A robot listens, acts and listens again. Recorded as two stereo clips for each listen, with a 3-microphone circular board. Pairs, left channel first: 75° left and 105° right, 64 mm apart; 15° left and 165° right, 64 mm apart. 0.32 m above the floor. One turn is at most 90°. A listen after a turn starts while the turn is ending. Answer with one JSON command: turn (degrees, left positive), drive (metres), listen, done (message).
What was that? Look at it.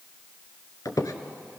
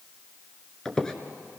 {"turn": 90}
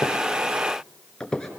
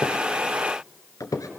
{"done": "Facing the squeak, 1 to 2 m away."}